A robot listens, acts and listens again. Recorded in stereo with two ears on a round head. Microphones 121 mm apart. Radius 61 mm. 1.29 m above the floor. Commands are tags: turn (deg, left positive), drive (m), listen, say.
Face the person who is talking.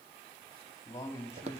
<turn deg="20"/>
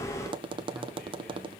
<listen/>
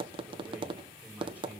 <turn deg="-10"/>
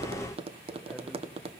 <listen/>
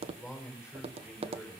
<say>Found it: a man speaking, straight ahead, over 4 m away.</say>